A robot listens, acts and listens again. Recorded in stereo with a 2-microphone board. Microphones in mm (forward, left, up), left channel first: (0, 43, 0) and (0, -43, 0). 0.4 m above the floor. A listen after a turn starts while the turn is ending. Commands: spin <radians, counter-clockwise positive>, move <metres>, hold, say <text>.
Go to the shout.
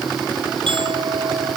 hold
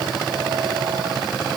hold
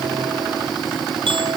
say I can't make out a shout to turn to.